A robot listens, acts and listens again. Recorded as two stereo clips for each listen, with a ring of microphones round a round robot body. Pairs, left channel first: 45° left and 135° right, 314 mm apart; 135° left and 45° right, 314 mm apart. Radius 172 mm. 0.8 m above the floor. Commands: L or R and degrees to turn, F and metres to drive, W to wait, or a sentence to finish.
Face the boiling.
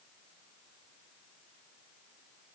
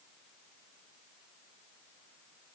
W
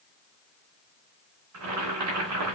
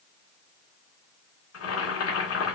R175
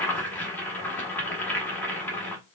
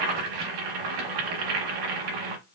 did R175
R40
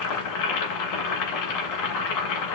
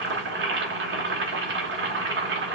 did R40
L10
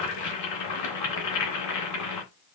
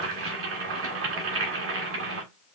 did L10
Facing the boiling, 1 to 2 m away.